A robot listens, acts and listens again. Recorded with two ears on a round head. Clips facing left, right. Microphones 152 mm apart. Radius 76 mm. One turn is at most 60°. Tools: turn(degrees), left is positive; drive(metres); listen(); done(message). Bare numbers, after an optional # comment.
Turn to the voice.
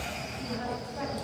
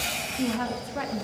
# The woman speaking: about 75° right or 105° right.
turn(-60)
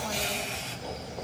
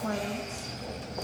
listen()
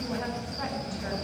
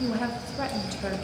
# So it is at 45° right.
turn(-45)
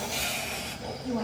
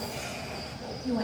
# The woman speaking is now 10° right.
turn(-10)
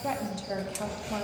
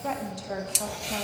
done("Facing the woman speaking.")